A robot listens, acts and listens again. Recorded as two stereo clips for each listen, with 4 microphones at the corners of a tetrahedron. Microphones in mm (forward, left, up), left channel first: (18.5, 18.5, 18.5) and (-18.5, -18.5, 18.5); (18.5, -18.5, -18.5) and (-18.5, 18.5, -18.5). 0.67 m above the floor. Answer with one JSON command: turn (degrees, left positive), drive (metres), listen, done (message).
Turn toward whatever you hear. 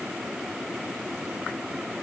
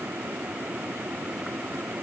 {"listen": true}
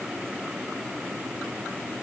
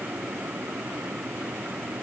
{"listen": true}
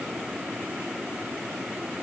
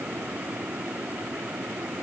{"done": "I can't make out anything to turn to."}